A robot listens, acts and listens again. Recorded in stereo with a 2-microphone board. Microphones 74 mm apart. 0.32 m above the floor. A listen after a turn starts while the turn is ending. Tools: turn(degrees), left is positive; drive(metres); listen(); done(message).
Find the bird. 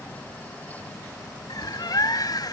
turn(degrees=55)
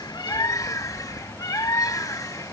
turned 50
turn(degrees=60)
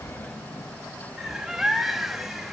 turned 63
done("Found it: a bird, straight ahead, under 1 m away.")